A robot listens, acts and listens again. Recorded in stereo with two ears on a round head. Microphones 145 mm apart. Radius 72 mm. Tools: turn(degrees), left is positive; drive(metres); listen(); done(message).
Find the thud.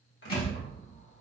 turn(degrees=35)
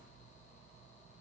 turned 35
listen()
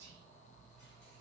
done("I heard a thud, but can't make it out now. It was about straight ahead or 110° left.")